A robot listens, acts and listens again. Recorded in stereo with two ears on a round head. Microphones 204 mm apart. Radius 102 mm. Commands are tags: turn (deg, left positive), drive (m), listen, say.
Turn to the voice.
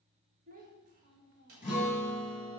<turn deg="-35"/>
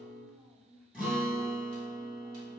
<say>Facing the child speaking.</say>